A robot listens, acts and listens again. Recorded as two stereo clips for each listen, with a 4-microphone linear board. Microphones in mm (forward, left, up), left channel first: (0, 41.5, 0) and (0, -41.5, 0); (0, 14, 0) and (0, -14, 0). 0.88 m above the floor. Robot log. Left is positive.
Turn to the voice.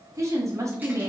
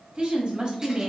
note: The woman speaking: about 45° right or 135° right.
cmd yaw -45
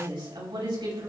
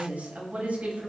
note: So it is at 90° right.
cmd yaw -90
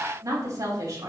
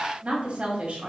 note: The woman speaking is now 45° right.
cmd yaw -45
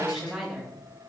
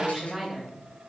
end: Found it: a woman speaking, straight ahead, over 4 m away.